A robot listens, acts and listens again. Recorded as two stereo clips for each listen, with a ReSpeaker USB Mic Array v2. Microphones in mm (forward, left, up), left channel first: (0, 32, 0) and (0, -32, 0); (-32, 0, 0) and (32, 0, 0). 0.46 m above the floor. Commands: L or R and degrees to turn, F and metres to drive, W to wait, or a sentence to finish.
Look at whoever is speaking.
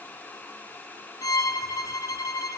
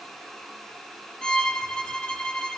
W
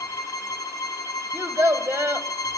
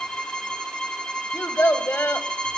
R135
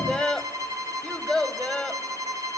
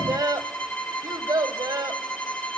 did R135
L10
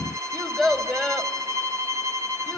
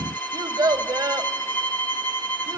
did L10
Facing the child speaking.